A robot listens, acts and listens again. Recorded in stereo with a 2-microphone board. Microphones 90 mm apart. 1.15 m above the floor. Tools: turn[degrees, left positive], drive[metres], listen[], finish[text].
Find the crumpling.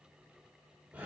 Action: listen[]
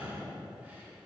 Action: listen[]
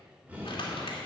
Thought: The crumpling: about 70° left or 110° left.
Action: turn[70]
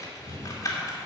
Thought: So it is at 40° left.
Action: turn[40]
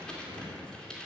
Thought: The crumpling is now 10° left.
Action: turn[10]
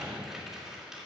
Action: finish[Found it: crumpling, straight ahead, 2 to 4 m away.]